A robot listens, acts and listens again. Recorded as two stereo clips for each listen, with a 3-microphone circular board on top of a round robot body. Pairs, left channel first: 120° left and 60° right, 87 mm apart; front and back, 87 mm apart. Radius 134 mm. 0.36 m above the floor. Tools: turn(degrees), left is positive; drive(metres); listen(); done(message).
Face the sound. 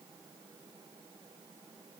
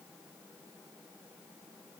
listen()
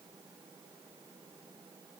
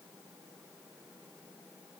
listen()
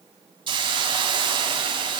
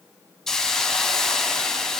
turn(degrees=-85)
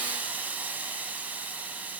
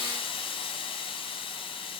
turn(degrees=10)
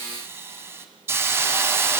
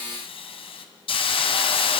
done("Found it: a hiss, straight ahead.")